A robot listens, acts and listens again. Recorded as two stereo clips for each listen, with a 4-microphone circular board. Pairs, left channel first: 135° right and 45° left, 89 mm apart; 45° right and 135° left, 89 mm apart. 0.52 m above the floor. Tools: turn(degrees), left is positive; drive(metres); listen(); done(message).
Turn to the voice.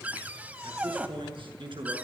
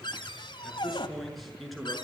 turn(degrees=45)
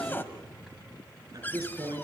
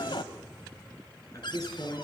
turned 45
done("Facing the man speaking, over 4 m away.")